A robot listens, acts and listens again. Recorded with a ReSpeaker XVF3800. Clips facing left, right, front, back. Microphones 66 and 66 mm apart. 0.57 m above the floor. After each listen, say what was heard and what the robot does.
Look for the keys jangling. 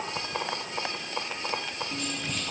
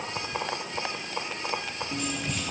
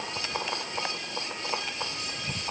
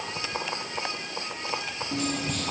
The keys jangling: 175° right. Turn 175° right.
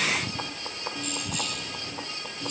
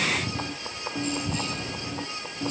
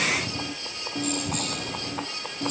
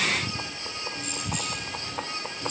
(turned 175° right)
The keys jangling is now 35° right. Turn 35° right.
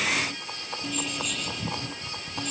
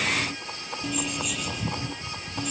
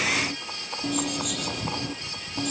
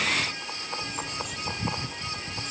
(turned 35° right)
Facing the keys jangling.